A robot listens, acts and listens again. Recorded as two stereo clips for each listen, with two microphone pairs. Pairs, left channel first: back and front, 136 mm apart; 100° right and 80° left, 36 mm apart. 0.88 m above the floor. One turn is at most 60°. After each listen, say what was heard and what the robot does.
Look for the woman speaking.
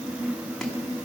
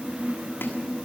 Keep listening.
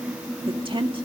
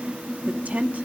The woman speaking: 45° left. Turn 45° left.
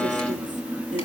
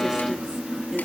Keep listening.
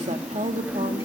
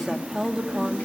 The woman speaking is now 10° left. Turn 10° left.
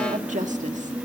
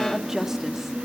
Facing the woman speaking, 1 to 2 m away.